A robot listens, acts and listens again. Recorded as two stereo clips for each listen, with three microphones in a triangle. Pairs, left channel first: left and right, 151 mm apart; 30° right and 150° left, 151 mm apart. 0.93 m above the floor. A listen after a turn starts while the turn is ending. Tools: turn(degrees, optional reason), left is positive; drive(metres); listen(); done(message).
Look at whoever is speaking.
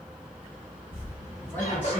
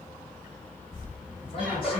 turn(degrees=15, reason="The man speaking: 15° left.")
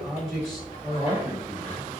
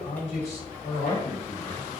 done("Facing the man speaking, 1 to 2 m away.")